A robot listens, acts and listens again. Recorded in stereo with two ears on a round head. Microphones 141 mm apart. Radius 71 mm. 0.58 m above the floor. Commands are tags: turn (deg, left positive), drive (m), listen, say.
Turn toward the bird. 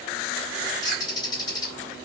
<turn deg="25"/>
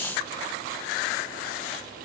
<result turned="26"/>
<listen/>
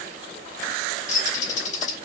<turn deg="125"/>
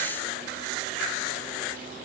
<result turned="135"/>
<turn deg="-10"/>
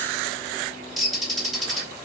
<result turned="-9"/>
<say>Found it: a bird, straight ahead, 2 to 4 m away.</say>